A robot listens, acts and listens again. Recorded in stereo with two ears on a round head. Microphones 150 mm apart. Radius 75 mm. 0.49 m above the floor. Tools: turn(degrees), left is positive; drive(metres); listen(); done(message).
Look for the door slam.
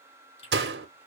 turn(degrees=-70)
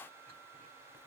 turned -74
listen()
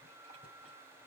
done("I heard a door slam, but can't make it out now. It was about 5° left or 35° right.")